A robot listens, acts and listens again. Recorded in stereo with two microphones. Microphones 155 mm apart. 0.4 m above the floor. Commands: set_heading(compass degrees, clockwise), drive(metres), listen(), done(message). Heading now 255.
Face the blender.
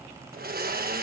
set_heading(345)
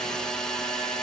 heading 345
done("Facing the blender.")